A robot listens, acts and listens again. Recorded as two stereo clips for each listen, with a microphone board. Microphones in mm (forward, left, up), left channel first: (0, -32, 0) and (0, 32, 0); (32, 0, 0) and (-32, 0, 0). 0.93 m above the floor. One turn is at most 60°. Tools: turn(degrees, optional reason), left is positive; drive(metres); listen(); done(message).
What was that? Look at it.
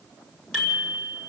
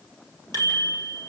turn(degrees=-15, reason="The bicycle bell: 15° right.")
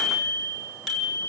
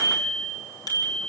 done("Found it: a bicycle bell, straight ahead, over 4 m away.")